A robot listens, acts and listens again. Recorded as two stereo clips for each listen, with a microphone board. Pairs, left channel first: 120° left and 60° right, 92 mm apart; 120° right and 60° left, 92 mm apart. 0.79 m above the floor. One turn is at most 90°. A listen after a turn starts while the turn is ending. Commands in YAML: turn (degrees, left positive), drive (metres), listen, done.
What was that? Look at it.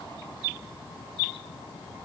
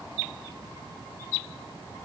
listen: true
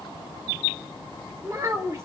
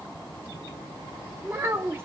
done: "Facing the child speaking."